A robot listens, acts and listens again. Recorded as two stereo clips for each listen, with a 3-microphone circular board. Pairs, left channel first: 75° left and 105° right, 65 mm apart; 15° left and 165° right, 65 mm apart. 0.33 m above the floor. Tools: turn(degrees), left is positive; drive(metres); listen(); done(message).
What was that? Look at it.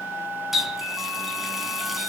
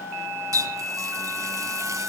turn(degrees=170)
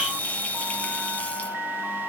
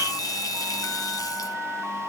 listen()
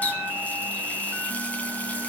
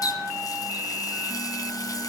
turn(degrees=10)
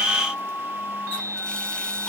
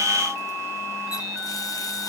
listen()
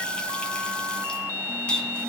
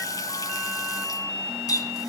done("Facing the running tap.")